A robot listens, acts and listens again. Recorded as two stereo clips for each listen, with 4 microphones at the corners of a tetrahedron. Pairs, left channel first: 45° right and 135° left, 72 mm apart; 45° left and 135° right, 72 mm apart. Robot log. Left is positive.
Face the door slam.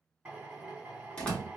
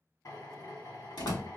note: The door slam: 30° left.
cmd yaw +30
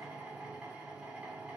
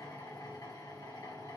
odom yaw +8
note: Nothing new. It was at 25° left.
cmd yaw +25
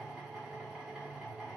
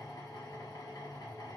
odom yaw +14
note: Nothing new. It was at 10° left.
cmd yaw +10
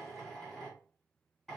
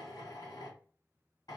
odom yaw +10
end: I heard a door slam from this way, but can't make it out now.